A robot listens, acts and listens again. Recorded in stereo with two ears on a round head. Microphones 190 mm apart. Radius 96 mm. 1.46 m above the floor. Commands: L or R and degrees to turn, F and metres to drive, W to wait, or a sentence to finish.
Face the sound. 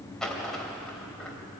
L30
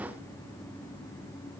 W
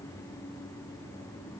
I heard a dropped coin, but can't make it out now. It was about 25° right or 145° left.